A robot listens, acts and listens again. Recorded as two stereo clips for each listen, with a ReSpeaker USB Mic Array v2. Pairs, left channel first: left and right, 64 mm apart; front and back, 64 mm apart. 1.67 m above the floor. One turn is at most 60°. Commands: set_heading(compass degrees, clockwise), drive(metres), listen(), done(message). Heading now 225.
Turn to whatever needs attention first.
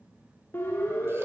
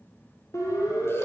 set_heading(190)
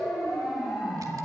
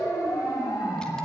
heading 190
done("Found it: a siren, straight ahead.")